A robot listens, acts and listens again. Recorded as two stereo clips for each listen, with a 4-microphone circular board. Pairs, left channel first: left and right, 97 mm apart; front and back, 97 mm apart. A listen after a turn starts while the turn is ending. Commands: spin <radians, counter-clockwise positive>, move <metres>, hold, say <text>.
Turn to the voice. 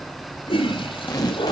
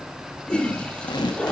hold
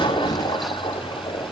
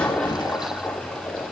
hold
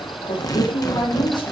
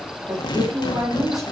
spin 2.18
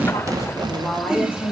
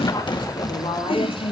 spin 0.35
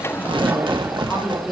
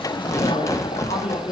say Found it: a woman speaking, straight ahead, over 4 m away.